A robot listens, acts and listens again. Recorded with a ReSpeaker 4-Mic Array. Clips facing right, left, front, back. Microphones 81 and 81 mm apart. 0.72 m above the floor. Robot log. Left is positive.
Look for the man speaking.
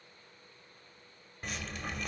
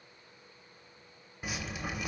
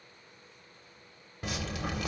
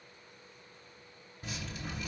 cmd idle
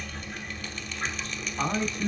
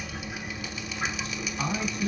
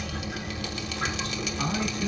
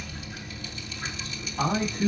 note: The man speaking: 140° right.
cmd yaw -140
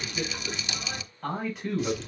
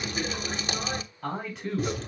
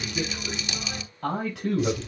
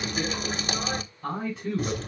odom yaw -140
end: Facing the man speaking, over 4 m away.